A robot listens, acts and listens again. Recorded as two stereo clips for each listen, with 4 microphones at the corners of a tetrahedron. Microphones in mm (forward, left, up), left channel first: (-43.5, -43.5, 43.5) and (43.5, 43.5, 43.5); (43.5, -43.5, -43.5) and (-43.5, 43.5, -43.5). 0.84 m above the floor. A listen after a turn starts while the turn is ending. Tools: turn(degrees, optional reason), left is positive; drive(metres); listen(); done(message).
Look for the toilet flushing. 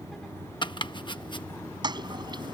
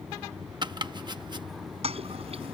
turn(degrees=100, reason="The toilet flushing: 100° left.")
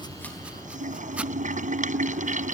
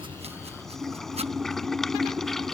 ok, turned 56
turn(degrees=40, reason="The toilet flushing is now 40° left.")
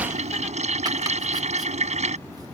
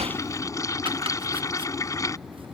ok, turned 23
turn(degrees=20, reason="The toilet flushing is now 20° left.")
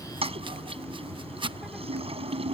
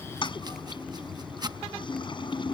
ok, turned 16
done("Facing the toilet flushing.")